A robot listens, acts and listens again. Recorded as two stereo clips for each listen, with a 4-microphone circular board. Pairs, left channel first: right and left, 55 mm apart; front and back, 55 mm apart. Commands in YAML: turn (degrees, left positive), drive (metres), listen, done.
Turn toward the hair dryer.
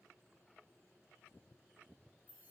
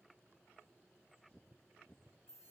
listen: true
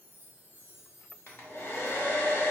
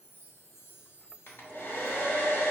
turn: -45
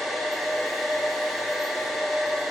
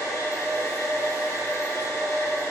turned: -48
done: "Found it: a hair dryer, straight ahead, 1 to 2 m away."